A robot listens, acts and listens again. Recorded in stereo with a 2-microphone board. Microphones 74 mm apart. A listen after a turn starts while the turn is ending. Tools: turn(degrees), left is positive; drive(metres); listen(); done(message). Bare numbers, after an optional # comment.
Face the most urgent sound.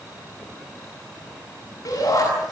# The shout: about 55° left or 125° left.
turn(55)
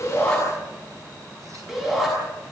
done("Found it: a shout, straight ahead, over 4 m away.")